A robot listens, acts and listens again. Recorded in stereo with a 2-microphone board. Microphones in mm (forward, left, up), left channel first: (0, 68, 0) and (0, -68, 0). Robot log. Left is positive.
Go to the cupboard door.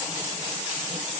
cmd idle
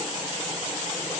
cmd idle
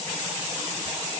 end: I can't make out a cupboard door.